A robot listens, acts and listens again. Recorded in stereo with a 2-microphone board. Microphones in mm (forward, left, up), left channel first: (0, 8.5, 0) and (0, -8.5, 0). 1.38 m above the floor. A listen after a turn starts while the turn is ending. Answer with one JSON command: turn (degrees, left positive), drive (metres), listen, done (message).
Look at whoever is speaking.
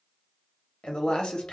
{"turn": 70}
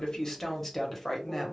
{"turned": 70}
{"turn": 10}
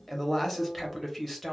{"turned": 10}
{"done": "Facing the woman speaking, 1 to 2 m away."}